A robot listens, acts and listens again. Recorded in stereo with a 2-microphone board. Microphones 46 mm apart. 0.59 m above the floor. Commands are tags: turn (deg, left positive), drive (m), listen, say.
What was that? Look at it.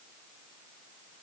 <listen/>
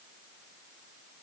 <listen/>
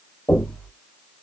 <turn deg="15"/>
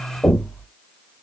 <say>Facing the knocking.</say>